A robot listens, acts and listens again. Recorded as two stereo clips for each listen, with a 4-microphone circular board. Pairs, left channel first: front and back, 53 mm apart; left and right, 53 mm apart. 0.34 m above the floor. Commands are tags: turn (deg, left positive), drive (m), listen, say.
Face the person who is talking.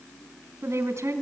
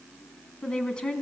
<turn deg="160"/>
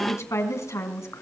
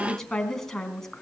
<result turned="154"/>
<turn deg="10"/>
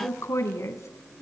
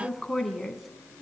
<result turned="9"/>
<say>Facing the woman speaking, 2 to 4 m away.</say>